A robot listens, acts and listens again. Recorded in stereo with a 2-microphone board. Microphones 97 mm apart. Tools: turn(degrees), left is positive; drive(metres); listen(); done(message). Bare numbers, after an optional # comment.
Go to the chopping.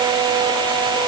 listen()
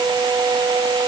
listen()
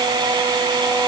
done("I can't make out chopping to turn to.")